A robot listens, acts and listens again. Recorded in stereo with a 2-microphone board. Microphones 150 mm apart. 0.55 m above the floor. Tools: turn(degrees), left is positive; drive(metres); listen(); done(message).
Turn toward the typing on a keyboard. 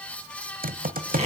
turn(degrees=-90)
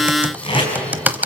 turn(degrees=-10)
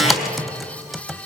done("Facing the typing on a keyboard.")